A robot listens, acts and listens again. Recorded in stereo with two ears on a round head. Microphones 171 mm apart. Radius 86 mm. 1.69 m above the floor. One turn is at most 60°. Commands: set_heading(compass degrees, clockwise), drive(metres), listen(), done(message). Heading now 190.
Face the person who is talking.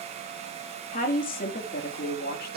set_heading(135)
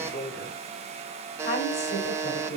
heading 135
set_heading(85)
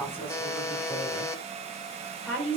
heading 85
set_heading(75)
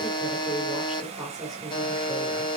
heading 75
done("Facing the woman speaking, over 4 m away.")